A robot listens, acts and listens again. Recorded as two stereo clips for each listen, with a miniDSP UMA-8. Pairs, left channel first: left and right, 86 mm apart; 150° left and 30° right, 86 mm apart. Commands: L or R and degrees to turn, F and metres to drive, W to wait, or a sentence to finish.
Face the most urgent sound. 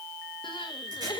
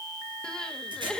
L70
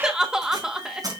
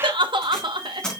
Found it: crying, straight ahead.